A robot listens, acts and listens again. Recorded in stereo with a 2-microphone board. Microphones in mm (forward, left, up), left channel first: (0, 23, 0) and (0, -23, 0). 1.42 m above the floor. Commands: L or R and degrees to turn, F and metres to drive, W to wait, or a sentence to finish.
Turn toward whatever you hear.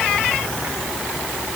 W
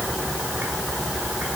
W
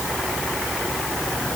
I can't make out anything.